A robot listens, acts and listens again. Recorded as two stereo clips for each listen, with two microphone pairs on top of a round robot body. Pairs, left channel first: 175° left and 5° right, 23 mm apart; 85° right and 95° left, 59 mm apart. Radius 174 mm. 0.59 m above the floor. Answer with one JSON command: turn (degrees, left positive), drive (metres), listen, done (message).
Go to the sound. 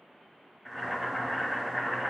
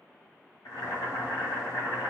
{"turn": -90}
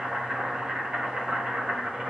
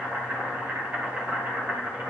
{"turn": 30}
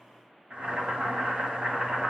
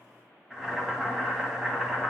{"turn": 15}
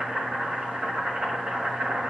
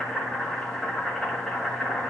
{"drive": 1.0}
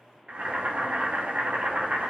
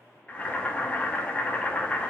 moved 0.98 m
{"turn": -20}
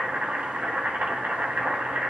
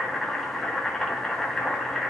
{"drive": 1.0}
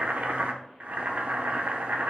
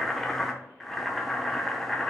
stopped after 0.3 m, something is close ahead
{"done": "I am next to the boiling."}